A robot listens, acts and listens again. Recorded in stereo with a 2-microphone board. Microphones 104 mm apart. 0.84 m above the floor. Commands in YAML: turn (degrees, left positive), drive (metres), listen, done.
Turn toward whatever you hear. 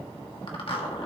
turn: 60
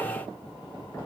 listen: true
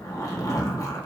turn: 40
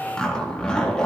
turn: 10
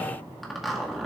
done: "Found it: a zipper, straight ahead."